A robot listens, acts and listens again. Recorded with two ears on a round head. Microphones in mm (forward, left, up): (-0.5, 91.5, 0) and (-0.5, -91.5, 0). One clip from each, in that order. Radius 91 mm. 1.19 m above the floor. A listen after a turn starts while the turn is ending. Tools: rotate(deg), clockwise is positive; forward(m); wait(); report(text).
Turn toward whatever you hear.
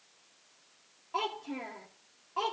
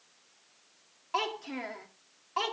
rotate(60)
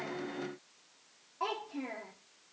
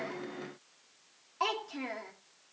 rotate(65)
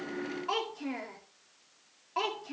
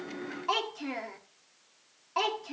rotate(20)
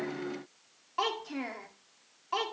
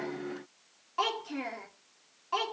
report("Found it: a child speaking, straight ahead, 2 to 4 m away.")